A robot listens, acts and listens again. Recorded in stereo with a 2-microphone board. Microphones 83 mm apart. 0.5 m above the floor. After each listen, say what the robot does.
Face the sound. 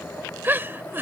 Turn 25° right.
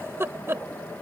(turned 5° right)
Turn 30° right.
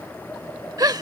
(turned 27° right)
Turn 120° right.
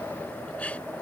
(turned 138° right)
Turn 15° left.
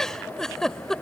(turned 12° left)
Found it: a giggle, straight ahead.